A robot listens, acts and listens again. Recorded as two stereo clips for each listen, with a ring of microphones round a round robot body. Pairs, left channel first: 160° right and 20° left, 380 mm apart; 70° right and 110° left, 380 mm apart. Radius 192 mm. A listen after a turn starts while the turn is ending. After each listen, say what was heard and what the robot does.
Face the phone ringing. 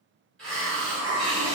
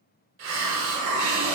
Keep listening.
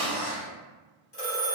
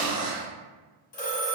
The phone ringing: 100° right. Turn 100° right.
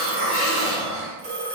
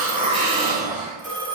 The phone ringing is now 10° right. Turn 10° right.
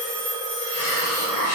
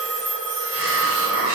Found it: a phone ringing, straight ahead, 1 to 2 m away.